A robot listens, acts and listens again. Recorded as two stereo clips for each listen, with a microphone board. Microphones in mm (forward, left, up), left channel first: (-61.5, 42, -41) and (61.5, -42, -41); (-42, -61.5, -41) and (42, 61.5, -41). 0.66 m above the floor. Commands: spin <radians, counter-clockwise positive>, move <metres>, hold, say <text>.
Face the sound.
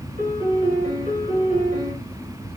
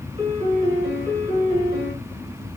say Facing the piano, 1 to 2 m away.